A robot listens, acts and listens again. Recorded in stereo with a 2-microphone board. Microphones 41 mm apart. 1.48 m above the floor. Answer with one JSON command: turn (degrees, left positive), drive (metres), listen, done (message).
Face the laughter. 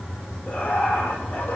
{"turn": 40}
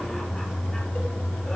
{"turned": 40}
{"listen": true}
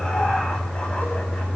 {"listen": true}
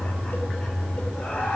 {"turn": 30}
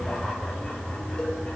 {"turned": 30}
{"listen": true}
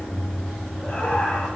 {"turn": 10}
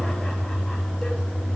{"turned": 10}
{"listen": true}
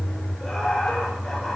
{"done": "Found it: laughter, straight ahead."}